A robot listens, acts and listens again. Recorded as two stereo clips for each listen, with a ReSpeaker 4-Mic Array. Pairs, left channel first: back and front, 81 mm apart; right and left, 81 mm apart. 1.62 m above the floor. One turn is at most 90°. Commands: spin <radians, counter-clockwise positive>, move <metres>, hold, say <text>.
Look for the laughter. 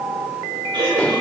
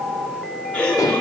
spin -0.26
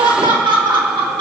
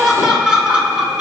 spin 0.17
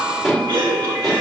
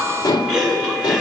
say Found it: laughter, straight ahead.